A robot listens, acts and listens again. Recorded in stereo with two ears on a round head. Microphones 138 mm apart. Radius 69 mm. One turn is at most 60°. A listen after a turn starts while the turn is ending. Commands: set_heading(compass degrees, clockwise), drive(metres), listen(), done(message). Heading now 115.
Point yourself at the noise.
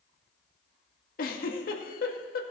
set_heading(55)
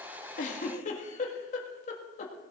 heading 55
set_heading(5)
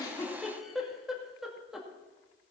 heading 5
done("Found it: a giggle, straight ahead.")